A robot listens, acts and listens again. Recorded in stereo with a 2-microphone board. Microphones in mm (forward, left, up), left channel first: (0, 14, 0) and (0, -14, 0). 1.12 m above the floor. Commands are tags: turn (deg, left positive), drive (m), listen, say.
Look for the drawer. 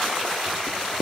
<listen/>
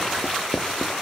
<listen/>
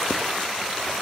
<say>I can't make out a drawer to turn to.</say>